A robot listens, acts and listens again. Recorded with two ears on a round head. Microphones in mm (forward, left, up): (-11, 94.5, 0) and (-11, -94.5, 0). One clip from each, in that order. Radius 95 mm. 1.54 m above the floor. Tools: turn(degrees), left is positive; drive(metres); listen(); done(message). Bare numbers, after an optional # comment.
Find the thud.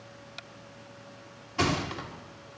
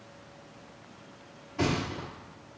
# The thud: about 50° left or 130° left.
turn(50)
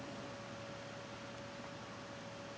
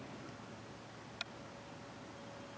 listen()
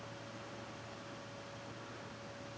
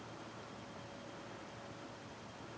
done("I heard a thud, but can't make it out now. It was about straight ahead or 80° left.")